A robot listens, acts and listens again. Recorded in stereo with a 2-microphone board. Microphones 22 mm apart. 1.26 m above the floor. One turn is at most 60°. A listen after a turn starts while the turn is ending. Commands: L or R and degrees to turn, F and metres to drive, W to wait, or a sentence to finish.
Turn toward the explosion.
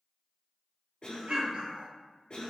R50
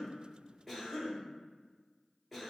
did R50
W
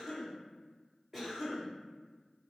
I heard an explosion, but can't make it out now. It was about straight ahead or 80° right.